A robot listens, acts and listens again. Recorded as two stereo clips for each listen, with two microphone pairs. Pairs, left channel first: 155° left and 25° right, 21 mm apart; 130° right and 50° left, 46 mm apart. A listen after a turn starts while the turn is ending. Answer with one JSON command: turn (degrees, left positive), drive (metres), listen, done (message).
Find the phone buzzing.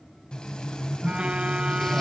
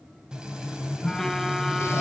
{"turn": -45}
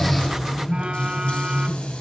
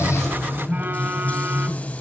{"done": "Found it: a phone buzzing, straight ahead, 1 to 2 m away."}